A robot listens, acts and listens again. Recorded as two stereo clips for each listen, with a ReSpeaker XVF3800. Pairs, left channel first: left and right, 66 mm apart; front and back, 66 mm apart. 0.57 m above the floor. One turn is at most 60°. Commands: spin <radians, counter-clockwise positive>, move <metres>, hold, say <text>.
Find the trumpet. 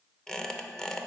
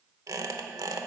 hold
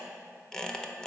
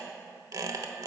hold
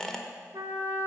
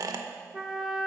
spin -1.05
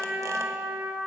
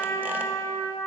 spin -0.44
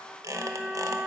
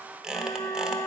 say Found it: a trumpet, straight ahead, 1 to 2 m away.